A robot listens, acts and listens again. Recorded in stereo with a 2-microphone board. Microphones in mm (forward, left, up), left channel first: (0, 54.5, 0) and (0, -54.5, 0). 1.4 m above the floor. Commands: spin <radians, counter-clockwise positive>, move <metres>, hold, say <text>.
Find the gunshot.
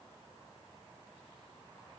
hold
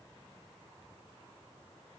hold
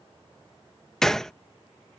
spin 0.52
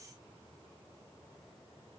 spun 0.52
hold
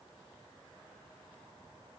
say I heard a gunshot, but can't make it out now. It was about 25° right or 145° left.